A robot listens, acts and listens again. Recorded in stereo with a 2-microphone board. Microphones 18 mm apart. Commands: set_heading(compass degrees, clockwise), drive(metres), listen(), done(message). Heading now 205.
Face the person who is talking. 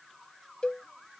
listen()
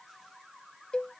listen()
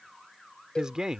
set_heading(245)
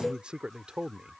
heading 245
set_heading(335)
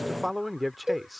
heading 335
done("Facing the man speaking.")